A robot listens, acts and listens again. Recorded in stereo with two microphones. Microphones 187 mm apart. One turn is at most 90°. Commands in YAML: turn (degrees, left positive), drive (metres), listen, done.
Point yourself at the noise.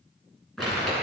turn: 30
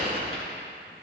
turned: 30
turn: 90
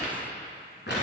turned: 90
turn: 70
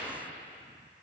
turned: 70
listen: true
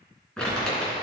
done: "Found it: crumpling, straight ahead, 2 to 4 m away."